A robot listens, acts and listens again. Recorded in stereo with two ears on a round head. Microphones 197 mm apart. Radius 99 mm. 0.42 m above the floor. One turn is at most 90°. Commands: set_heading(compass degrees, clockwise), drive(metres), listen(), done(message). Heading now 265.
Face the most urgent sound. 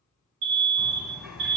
set_heading(330)
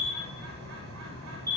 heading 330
set_heading(350)
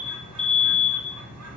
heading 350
done("Facing the alarm.")